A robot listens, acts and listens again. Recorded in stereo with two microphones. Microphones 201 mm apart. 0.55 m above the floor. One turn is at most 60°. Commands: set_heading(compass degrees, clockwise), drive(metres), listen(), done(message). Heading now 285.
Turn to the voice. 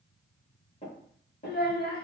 set_heading(235)
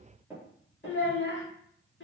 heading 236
set_heading(176)
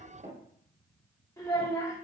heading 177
set_heading(162)
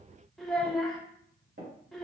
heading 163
done("Found it: a child speaking, straight ahead.")